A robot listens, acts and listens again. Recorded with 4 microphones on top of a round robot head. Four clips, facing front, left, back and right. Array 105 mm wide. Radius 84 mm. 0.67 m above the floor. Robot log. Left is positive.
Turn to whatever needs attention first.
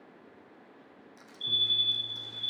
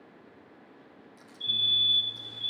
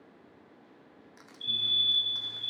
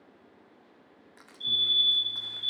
note: The fire alarm: 150° left.
cmd yaw +150
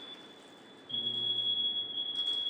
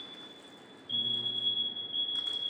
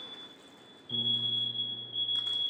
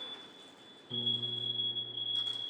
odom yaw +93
note: The fire alarm is now 55° left.
cmd yaw +55
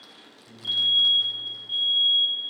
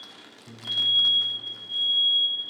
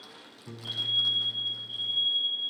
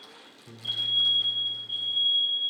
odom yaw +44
note: The fire alarm is now 10° left.
cmd yaw +10
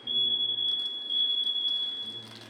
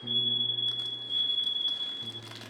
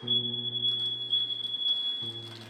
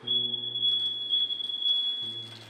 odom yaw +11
end: Found it: a fire alarm, straight ahead, over 4 m away.